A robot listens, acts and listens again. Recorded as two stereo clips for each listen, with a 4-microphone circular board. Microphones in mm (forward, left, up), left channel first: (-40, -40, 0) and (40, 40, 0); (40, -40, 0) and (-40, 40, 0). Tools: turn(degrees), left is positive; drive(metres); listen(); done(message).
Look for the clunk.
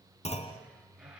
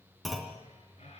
turn(degrees=-135)
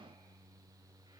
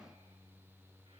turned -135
done("Facing where the clunk came from. I can't hear it now.")